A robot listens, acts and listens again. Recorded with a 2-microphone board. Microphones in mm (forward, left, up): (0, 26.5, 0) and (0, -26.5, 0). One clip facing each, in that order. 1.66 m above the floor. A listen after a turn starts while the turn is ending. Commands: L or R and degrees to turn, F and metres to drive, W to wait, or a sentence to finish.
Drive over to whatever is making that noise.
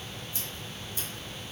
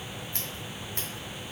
R90
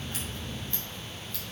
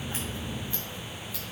W
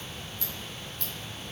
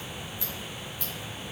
R10
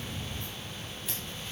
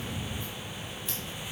W
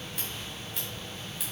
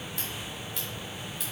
F1.0
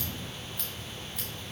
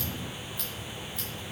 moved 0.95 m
W
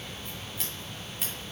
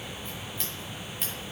F1.0
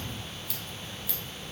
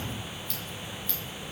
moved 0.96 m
F1.0
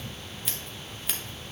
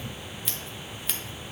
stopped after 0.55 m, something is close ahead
Arrived at the scissors, straight ahead.